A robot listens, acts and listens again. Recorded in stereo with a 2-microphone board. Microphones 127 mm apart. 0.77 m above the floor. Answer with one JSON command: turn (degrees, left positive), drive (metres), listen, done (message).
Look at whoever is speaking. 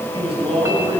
{"turn": -40}
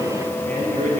{"turn": -95}
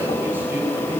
{"listen": true}
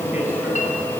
{"listen": true}
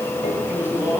{"turn": -15}
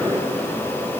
{"listen": true}
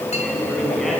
{"done": "Found it: a man speaking, straight ahead, over 4 m away."}